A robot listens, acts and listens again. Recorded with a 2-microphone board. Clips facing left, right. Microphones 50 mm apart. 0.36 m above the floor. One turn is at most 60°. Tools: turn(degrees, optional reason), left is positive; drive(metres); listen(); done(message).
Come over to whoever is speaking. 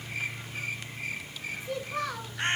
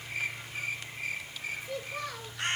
turn(degrees=60)
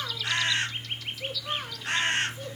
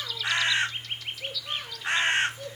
turn(degrees=30, reason="So it is at 30° left.")
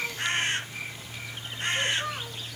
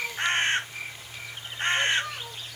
turn(degrees=20, reason="The child speaking is now 20° left.")
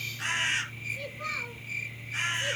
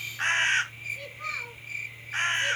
listen()
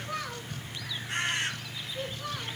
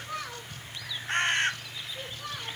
drive(metres=1.0)
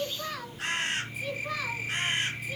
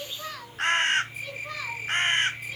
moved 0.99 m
drive(metres=1.0)
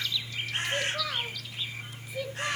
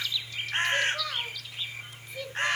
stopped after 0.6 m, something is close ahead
done("I am next to the child speaking.")